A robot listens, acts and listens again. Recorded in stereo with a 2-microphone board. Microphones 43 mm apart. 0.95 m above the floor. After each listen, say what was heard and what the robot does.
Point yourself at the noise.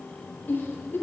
The giggle: about 55° left or 125° left. Turn 55° left.
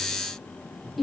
Found it: a giggle, straight ahead.